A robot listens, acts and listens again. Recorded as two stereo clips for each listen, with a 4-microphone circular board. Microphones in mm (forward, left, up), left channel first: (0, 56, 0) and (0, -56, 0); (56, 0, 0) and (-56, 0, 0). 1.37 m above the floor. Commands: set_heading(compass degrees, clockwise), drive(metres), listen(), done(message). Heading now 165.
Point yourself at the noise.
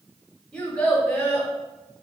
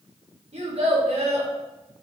set_heading(355)
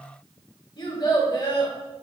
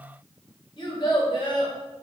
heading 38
set_heading(353)
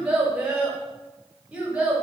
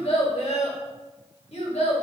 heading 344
set_heading(354)
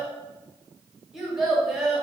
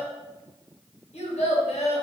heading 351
done("Found it: a child speaking, straight ahead.")